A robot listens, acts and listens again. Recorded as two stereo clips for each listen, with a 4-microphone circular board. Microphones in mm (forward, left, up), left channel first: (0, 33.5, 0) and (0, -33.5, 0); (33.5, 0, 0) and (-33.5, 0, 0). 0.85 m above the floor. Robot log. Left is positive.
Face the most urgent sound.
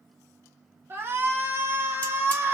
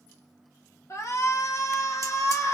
note: The shout: 35° right.
cmd yaw -35
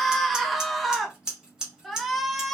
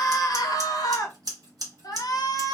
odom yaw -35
end: Found it: a shout, straight ahead, under 1 m away.